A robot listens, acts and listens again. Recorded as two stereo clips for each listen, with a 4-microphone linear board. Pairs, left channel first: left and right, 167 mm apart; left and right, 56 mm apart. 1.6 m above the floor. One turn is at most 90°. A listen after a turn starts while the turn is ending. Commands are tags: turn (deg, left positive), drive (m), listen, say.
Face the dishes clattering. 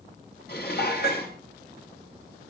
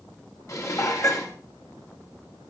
<turn deg="70"/>
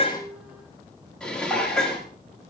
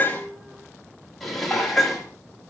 <say>Facing the dishes clattering, 2 to 4 m away.</say>